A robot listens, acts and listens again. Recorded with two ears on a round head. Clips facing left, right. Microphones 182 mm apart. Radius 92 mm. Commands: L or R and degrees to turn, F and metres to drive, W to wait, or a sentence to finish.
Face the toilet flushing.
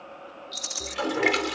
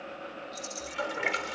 L65
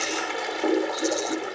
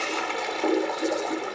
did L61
Found it: a toilet flushing, straight ahead.